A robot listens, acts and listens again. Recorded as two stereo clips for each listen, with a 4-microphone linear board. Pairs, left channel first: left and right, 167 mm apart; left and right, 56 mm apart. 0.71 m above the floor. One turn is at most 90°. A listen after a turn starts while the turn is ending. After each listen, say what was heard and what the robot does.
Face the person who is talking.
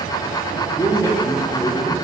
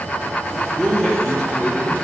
The man speaking: about 35° left or 145° left. Turn 35° left.
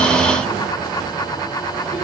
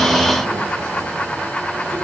Keep listening.
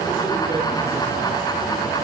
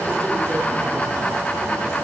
Keep listening.
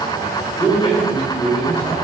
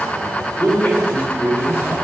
The man speaking: about 40° left or 140° left. Turn 40° left.
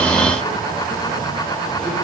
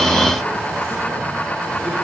Keep listening.
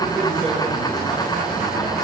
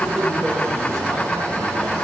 Facing the man speaking, 2 to 4 m away.